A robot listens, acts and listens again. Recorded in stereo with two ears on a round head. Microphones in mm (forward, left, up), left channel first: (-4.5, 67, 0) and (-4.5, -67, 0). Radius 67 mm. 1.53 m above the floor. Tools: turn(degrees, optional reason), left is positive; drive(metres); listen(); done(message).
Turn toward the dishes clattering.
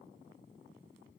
listen()
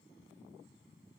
listen()
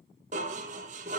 turn(degrees=-50, reason="The dishes clattering: about 50° right or 130° right.")
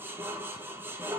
turn(degrees=-15, reason="So it is at 15° right.")
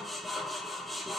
done("Facing the dishes clattering.")